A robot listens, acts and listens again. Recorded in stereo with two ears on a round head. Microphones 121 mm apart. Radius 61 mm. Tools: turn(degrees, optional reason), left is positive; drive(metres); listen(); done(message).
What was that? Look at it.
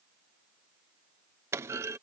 turn(degrees=-20, reason="The clunk: about 20° right or 160° right.")
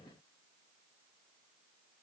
listen()
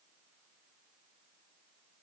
done("I heard a clunk, but can't make it out now. It was about straight ahead or 140° right.")